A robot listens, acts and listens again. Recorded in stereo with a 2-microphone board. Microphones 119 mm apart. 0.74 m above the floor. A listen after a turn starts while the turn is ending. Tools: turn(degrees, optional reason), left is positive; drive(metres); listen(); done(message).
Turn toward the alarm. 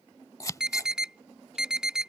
turn(degrees=-30)
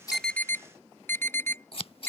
turn(degrees=25, reason="So it is at 25° left.")
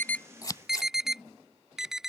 done("Facing the alarm.")